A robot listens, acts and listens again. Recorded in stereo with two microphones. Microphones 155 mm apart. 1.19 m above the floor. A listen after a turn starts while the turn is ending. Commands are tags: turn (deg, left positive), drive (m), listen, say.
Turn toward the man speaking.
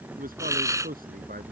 <turn deg="-70"/>
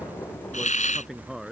<say>Found it: a man speaking, straight ahead.</say>